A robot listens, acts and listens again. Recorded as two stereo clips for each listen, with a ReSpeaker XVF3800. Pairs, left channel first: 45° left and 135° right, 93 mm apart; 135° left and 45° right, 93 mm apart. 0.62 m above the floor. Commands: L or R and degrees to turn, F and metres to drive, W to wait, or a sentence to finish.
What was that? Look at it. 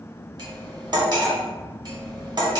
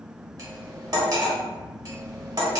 R95
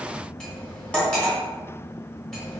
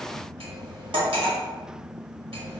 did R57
R35
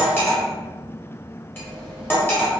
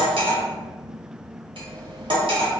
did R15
R20
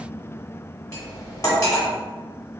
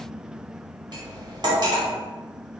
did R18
Facing the cutlery clinking.